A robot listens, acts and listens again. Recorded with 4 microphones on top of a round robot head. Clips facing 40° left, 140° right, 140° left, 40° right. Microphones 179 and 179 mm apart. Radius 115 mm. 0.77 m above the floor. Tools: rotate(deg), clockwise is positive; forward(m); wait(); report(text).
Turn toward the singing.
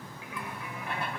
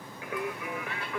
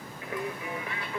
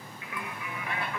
rotate(160)
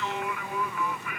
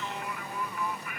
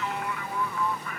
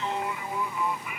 rotate(-40)
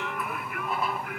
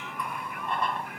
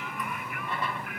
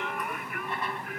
rotate(-15)
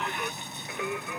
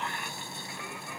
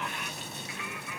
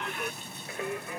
rotate(-15)
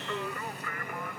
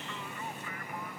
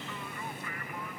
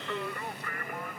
report("Found it: singing, straight ahead.")